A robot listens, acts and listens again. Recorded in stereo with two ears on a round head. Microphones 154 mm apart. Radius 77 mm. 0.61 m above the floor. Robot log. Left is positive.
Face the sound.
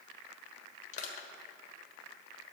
note: The crushing: about 45° left or 135° left.
cmd yaw +45
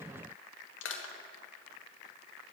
note: So it is at 90° left.
cmd yaw +90
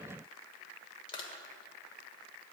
note: The crushing is now 30° left.
cmd yaw +30
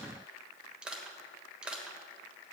end: Facing the crushing.